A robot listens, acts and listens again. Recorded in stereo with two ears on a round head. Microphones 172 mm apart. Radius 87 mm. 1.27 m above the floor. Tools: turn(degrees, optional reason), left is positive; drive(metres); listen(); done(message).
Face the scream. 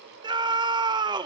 turn(degrees=-25, reason="The scream: about 25° right or 155° right.")
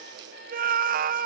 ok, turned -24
turn(degrees=-130, reason="So it is at 130° right.")
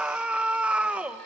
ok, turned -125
done("Found it: a scream, straight ahead.")